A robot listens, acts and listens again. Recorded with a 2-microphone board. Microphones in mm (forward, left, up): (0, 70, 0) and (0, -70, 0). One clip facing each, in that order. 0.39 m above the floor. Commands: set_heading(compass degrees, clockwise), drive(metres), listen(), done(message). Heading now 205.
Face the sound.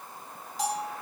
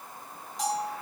set_heading(175)
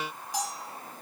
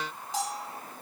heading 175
set_heading(200)
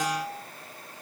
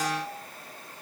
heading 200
done("Found it: a bell, straight ahead.")